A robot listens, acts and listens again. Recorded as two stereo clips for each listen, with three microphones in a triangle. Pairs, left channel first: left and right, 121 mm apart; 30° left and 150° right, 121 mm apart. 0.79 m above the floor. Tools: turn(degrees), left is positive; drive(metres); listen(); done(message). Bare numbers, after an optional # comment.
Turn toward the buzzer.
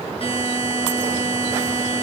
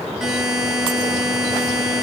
# The buzzer: 125° left.
turn(125)
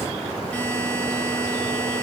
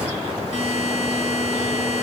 # The buzzer is now 10° left.
turn(10)
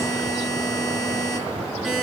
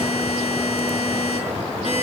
done("Facing the buzzer, over 4 m away.")